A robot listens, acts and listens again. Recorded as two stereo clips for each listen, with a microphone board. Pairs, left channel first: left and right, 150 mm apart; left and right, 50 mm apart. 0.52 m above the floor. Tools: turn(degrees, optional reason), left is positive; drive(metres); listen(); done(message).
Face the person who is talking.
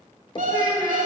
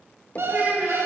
turn(degrees=-35, reason="The child speaking: about 35° right or 145° right.")
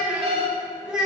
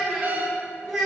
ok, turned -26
done("Found it: a child speaking, straight ahead, 2 to 4 m away.")